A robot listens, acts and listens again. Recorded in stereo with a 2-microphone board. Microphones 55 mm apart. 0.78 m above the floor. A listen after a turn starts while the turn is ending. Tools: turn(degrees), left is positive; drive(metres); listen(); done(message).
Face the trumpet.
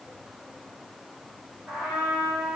turn(degrees=-15)
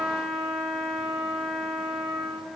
done("Facing the trumpet, 2 to 4 m away.")